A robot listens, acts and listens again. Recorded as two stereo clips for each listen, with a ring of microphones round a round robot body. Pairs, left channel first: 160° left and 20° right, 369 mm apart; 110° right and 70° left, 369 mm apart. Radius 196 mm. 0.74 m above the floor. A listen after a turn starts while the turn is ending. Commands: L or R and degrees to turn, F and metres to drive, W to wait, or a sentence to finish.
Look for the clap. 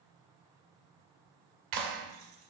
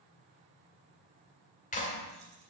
R45
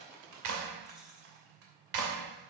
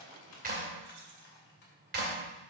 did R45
Facing the clap, 2 to 4 m away.